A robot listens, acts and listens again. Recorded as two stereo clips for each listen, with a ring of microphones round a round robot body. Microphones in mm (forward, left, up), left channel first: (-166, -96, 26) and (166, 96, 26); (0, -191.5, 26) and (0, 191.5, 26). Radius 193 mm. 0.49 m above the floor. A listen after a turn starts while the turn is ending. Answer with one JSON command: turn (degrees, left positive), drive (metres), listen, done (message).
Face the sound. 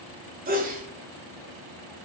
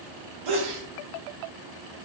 {"turn": 95}
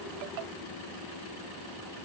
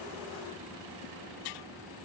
{"done": "I heard a sneeze from this way, but can't make it out now."}